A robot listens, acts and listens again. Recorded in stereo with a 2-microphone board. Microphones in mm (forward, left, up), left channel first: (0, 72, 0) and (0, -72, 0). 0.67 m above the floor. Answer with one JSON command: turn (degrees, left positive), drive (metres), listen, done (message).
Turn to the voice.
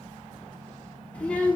{"turn": 30}
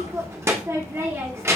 {"turn": -20}
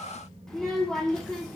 {"done": "Found it: a child speaking, straight ahead."}